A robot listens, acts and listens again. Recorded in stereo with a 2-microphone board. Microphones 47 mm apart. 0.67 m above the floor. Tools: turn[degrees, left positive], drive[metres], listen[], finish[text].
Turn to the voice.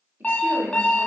Thought: The woman speaking: about 50° right or 130° right.
Action: turn[-50]
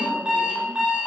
Action: listen[]
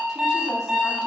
Action: listen[]
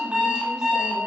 Action: finish[I heard a woman speaking, but can't make it out now. It was about straight ahead or 80° right.]